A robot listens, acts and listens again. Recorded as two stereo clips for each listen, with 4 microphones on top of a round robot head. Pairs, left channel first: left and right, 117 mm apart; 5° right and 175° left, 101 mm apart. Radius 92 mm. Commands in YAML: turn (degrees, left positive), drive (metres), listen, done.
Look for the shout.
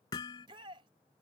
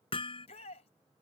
turn: -35
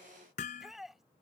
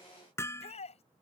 done: "Facing the shout."